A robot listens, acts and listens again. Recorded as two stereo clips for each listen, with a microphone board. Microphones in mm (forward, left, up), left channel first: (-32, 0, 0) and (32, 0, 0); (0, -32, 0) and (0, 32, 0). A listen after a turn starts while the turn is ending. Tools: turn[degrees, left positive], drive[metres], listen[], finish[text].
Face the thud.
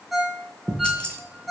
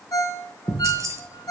Thought: The thud: 50° left.
Action: turn[50]
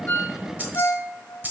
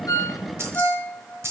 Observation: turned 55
Action: finish[I heard a thud from this way, but can't make it out now.]